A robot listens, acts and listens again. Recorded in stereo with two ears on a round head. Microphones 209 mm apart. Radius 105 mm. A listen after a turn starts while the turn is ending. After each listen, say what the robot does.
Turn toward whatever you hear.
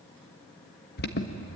Turn 45° left.
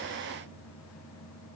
Turn 90° left.
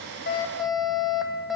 Facing the alarm, 1 to 2 m away.